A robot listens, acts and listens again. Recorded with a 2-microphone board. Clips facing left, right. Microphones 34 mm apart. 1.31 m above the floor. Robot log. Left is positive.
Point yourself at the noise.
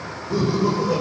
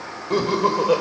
note: The laughter: about 60° right or 120° right.
cmd yaw -60
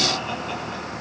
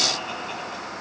cmd idle
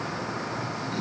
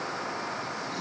cmd idle
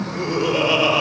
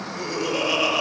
note: So it is at 20° left.
cmd yaw +20
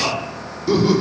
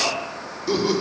end: Found it: laughter, straight ahead.